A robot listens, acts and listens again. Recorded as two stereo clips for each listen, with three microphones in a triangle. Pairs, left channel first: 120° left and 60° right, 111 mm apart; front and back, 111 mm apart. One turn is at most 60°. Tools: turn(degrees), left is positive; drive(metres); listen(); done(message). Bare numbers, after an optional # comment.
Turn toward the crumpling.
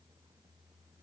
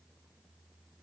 listen()
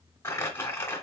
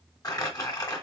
# The crumpling: 55° left.
turn(55)
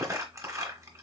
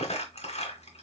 done("Found it: crumpling, straight ahead.")